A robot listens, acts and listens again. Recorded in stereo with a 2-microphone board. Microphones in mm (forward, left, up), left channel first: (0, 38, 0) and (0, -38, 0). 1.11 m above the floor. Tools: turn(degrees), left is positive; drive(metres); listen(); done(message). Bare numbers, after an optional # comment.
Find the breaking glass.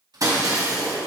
# The breaking glass: about 45° right or 135° right.
turn(-45)
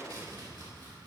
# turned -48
listen()
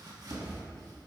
done("I heard breaking glass, but can't make it out now. It was about straight ahead or 85° right.")